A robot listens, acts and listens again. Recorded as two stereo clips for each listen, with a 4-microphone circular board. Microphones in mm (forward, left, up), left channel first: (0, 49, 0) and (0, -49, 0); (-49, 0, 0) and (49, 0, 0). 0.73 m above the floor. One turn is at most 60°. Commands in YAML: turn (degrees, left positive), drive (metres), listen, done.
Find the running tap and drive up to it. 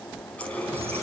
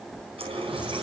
turn: 15
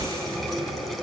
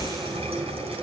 drive: 1.0
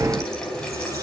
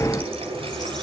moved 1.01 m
drive: 1.0
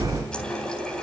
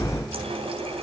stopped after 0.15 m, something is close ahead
turn: 10
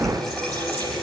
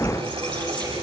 done: "Something is in my way. I am facing the running tap but have not reached it."